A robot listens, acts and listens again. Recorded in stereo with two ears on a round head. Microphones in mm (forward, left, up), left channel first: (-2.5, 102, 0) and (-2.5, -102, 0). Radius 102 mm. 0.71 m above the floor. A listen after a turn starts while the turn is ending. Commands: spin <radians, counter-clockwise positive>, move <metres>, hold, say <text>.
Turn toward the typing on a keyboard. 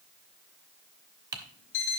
spin -0.35
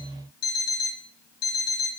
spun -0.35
hold
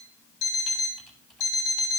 hold
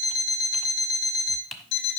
say Found it: typing on a keyboard, straight ahead.